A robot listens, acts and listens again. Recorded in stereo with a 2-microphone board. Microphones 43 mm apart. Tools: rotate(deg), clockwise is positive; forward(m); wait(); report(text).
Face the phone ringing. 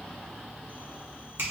wait()
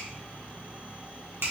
wait()
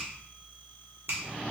report("I can't make out a phone ringing to turn to.")